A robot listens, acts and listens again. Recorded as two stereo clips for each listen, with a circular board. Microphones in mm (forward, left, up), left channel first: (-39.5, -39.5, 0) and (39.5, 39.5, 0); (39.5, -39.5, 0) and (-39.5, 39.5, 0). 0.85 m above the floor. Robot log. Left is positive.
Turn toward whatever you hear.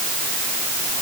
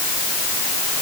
cmd idle
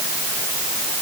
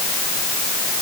cmd idle
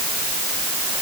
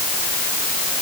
end: I can't make out anything.